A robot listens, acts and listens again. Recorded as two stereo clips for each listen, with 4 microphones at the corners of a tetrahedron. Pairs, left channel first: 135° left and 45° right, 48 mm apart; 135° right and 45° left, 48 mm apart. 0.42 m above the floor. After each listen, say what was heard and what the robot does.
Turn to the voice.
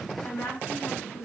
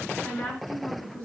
The woman speaking: 155° left. Turn 155° left.
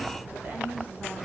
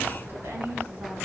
Facing the woman speaking.